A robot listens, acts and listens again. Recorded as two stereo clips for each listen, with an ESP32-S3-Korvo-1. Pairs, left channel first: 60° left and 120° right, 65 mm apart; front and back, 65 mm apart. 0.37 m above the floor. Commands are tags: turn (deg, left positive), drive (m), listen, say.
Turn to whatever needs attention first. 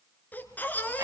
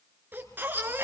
<turn deg="125"/>
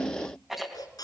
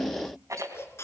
<turn deg="50"/>
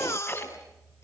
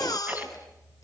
<turn deg="15"/>
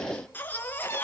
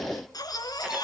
<say>Found it: a baby crying, straight ahead.</say>